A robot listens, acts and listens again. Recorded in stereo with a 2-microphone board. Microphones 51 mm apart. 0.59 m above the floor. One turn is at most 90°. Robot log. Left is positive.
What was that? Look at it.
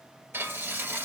note: The frying: about 50° right or 130° right.
cmd yaw -50
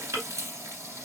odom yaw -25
note: So it is at 105° right.
cmd yaw -90
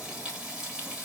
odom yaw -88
note: The frying is now 15° right.
cmd yaw -15
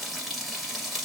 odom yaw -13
end: Facing the frying.